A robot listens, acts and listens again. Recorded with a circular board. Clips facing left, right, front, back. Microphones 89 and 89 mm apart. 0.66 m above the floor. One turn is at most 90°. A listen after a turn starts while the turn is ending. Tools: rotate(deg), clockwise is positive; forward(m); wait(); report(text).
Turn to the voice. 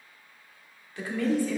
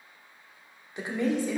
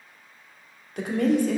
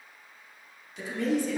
rotate(20)
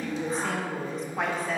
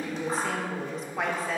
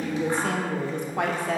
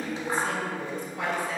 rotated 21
report("Found it: a woman speaking, straight ahead.")